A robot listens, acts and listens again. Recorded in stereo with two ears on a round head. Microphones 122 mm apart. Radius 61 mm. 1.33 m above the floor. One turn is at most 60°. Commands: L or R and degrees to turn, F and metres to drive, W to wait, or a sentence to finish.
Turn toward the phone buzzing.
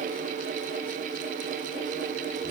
W
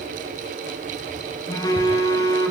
L30
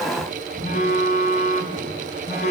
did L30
L60
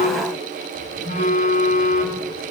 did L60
L60
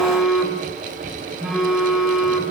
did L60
Facing the phone buzzing, over 4 m away.